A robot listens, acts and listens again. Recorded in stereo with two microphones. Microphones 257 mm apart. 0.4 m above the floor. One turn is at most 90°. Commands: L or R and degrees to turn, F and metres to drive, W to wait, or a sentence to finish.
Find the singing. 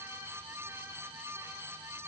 W
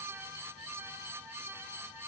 W
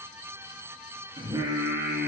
R30
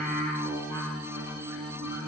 R90
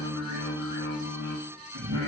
R70
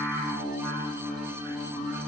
Facing the singing, 2 to 4 m away.